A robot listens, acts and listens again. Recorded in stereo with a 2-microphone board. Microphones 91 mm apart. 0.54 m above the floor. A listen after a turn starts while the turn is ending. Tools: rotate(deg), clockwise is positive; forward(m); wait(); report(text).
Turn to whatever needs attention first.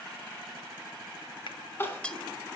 rotate(-25)
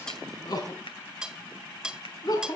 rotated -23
rotate(-135)
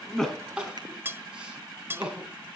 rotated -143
rotate(10)
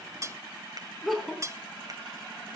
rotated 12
report("Found it: crying, straight ahead.")